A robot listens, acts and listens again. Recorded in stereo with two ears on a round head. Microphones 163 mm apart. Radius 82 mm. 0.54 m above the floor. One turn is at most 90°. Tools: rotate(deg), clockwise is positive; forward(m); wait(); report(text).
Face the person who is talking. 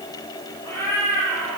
wait()
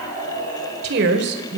rotate(60)
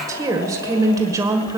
rotate(20)
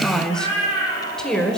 report("Facing the woman speaking.")